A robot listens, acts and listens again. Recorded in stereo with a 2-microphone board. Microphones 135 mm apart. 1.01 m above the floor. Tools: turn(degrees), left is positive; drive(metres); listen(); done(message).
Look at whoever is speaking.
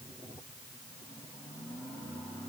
listen()
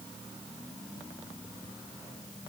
listen()
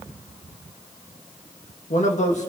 turn(degrees=65)
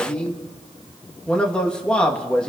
turn(degrees=10)
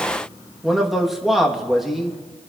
done("Found it: a man speaking, straight ahead.")